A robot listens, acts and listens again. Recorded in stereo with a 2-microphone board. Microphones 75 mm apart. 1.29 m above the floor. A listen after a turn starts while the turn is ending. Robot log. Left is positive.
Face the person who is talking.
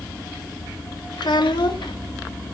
cmd yaw +90
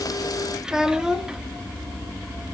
note: So it is at 10° right.
cmd yaw -10
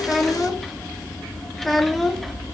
end: Found it: a child speaking, straight ahead, 1 to 2 m away.